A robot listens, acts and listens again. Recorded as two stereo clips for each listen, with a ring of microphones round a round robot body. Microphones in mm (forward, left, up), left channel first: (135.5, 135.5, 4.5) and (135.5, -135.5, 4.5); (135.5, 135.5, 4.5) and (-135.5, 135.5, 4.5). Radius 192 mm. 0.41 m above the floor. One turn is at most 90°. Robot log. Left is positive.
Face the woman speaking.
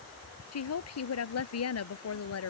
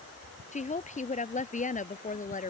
note: The woman speaking: 60° left.
cmd yaw +60
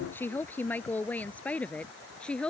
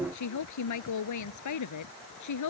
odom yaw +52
end: Found it: a woman speaking, straight ahead.